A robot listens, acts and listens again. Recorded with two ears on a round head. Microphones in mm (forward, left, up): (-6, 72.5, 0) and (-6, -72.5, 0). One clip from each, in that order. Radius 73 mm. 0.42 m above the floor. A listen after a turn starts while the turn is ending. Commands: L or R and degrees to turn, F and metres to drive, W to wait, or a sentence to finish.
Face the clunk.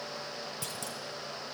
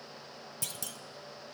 R25
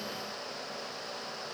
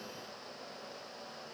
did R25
W
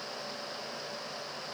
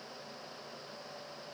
I heard a clunk, but can't make it out now. It was about straight ahead or 130° right.